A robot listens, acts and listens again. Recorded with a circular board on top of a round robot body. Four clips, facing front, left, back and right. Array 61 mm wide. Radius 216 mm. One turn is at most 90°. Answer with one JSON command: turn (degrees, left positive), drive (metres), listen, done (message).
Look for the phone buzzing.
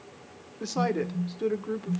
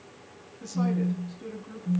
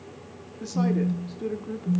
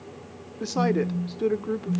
{"turn": 90}
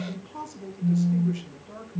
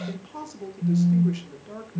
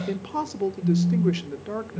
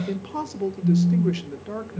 {"turn": 40}
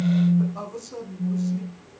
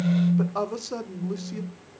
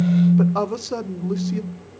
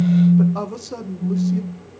{"turn": 10}
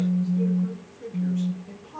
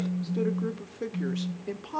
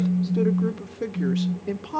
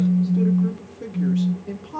{"done": "Found it: a phone buzzing, straight ahead."}